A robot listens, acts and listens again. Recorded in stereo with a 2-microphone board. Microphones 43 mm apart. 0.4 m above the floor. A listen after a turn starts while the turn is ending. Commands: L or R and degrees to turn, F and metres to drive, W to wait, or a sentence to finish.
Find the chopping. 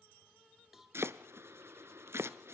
R75
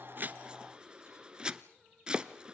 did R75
R20
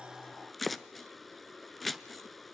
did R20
Facing the chopping, under 1 m away.